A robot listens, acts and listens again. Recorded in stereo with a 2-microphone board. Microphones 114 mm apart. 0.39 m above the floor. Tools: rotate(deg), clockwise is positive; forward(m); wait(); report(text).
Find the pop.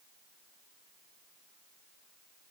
wait()
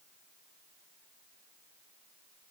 wait()
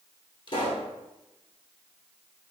rotate(-45)
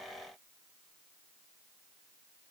wait()
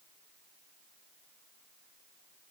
report("I heard a pop, but can't make it out now. It was about straight ahead or 90° left.")